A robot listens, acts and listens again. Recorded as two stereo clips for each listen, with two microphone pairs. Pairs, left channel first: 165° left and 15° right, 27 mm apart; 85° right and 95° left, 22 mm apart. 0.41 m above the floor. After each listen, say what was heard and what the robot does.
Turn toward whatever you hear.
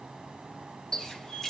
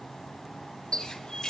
The running tap: 130° right. Turn 130° right.
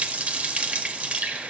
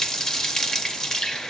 The running tap is now 25° right. Turn 25° right.
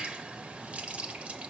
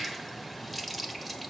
Found it: a running tap, straight ahead.